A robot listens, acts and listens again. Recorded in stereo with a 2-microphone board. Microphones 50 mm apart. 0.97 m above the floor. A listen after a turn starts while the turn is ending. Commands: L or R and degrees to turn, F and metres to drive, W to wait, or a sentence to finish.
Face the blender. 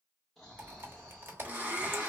R30
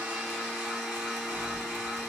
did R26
Facing the blender, 1 to 2 m away.